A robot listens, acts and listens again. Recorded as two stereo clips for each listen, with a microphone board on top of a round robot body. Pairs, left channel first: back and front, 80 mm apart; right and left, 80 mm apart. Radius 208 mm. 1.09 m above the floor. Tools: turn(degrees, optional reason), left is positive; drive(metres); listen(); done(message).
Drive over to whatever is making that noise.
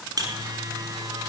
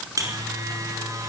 turn(degrees=40, reason="The buzzer: 40° left.")
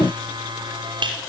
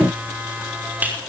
turn(degrees=20, reason="The buzzer is now 20° left.")
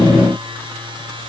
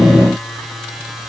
drive(metres=1.0)
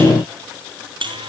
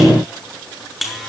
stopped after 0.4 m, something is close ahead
done("Blocked. The buzzer is further on, straight ahead.")